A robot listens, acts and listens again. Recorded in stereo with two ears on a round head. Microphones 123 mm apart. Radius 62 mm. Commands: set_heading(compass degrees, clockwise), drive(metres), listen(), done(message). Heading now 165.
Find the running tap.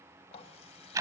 set_heading(115)
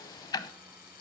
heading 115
set_heading(40)
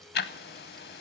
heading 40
listen()
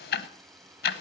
listen()
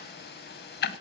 done("I heard a running tap from this way, but can't make it out now.")